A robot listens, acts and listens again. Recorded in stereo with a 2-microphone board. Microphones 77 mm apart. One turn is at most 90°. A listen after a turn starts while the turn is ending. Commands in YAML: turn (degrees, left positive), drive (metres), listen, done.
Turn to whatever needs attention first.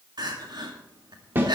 turn: -65
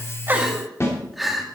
done: "Facing the crying, 2 to 4 m away."